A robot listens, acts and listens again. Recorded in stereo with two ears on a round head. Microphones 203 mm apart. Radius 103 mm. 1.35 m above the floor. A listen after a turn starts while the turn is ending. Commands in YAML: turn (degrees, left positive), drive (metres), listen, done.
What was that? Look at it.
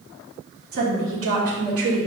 turn: -65
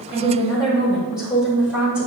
done: "Facing the woman speaking, 2 to 4 m away."